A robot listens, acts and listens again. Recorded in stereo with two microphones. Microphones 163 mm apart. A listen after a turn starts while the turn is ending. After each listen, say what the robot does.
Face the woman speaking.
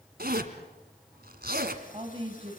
Turn 35° right.
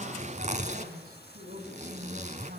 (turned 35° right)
Turn 100° right.
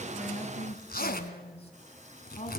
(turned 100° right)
Turn 40° left.
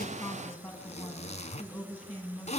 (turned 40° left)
Facing the woman speaking, over 4 m away.